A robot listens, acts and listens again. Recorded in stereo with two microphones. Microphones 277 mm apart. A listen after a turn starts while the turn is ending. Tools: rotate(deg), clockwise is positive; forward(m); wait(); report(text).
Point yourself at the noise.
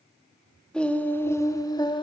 rotate(-15)
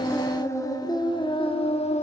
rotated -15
rotate(-25)
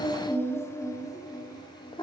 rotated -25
rotate(-15)
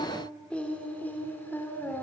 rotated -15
rotate(-30)
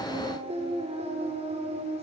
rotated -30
rotate(25)
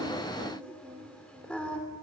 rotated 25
report("Facing the singing, 2 to 4 m away.")